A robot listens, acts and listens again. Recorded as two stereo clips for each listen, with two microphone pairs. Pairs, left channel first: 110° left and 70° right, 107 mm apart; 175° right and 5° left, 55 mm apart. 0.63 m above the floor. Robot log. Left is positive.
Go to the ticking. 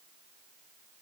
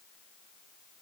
cmd idle
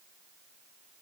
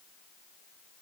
cmd idle
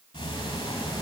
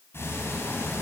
note: The ticking: 135° left.
cmd yaw +135
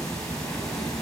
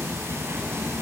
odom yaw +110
note: The ticking is now 25° left.
cmd yaw +25
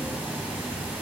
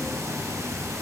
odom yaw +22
cmd fwd 1.0
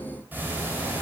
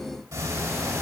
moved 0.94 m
cmd fwd 1.0
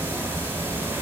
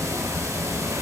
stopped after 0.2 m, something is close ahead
end: I am next to the ticking.